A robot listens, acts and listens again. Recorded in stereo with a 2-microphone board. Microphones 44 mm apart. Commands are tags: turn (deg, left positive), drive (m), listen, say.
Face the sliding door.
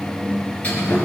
<turn deg="30"/>
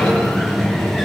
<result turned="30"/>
<say>Found it: a sliding door, straight ahead, 2 to 4 m away.</say>